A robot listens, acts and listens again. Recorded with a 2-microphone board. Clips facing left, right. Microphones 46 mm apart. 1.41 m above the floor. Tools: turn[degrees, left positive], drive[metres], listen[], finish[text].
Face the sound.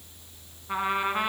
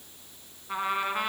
Action: turn[30]
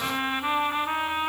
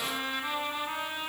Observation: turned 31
Thought: So it is at 135° left.
Action: turn[135]
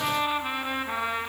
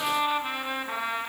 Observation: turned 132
Action: finish[Found it: a trumpet, straight ahead, 2 to 4 m away.]